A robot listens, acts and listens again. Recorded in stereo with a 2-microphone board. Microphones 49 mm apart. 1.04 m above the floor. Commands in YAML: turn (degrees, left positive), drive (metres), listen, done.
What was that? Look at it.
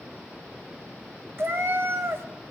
turn: -55
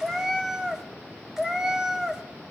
turn: -10
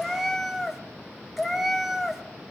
done: "Facing the cat meowing, under 1 m away."